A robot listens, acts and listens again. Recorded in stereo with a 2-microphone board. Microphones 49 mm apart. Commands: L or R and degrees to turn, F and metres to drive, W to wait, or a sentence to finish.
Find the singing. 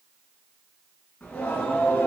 L40
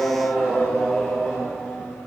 Facing the singing, over 4 m away.